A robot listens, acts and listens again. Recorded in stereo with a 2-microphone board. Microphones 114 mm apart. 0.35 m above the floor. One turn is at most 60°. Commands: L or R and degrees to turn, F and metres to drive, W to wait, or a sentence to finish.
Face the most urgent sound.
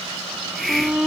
R30
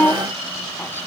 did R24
L15
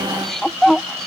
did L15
Found it: a shout, straight ahead.